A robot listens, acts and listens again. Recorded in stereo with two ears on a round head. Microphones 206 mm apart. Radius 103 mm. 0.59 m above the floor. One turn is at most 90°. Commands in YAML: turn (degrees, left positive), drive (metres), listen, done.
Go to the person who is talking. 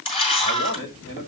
turn: 55
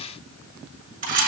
listen: true
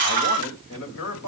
turn: 65
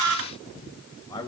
turn: 15
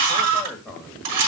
drive: 1.0
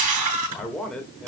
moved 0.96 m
drive: 1.0
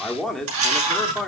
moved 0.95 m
drive: 1.0
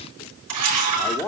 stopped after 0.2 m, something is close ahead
turn: 15
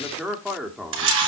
done: "Arrived at the man speaking, straight ahead."